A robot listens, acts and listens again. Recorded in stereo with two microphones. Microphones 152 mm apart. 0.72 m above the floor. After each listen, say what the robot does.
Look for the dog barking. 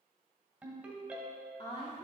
Keep listening.
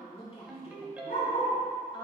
Turn 90° left.
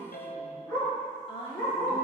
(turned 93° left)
Turn 15° left.
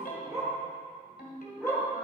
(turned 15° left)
Facing the dog barking.